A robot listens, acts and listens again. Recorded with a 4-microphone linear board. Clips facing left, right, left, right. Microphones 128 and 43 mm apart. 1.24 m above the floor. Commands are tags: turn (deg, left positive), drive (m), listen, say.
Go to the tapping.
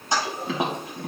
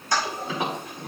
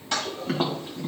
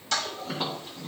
<turn deg="70"/>
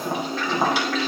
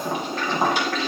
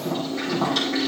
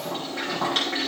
<drive m="1.0"/>
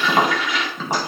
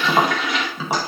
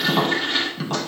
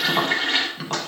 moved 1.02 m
<turn deg="-10"/>
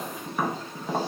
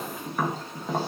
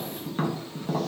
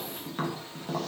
<drive m="1.0"/>
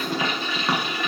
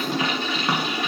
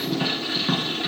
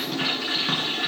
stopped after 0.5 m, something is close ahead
<say>Arrived at the tapping, straight ahead.</say>